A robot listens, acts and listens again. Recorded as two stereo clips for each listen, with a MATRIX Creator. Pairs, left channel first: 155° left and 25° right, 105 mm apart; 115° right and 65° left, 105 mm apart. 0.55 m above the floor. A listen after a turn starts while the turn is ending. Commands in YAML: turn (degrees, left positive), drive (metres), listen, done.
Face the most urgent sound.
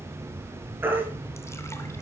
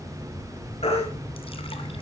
turn: -90
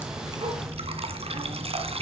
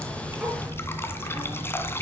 listen: true
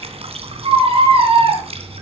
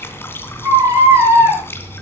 done: "Found it: a baby crying, straight ahead."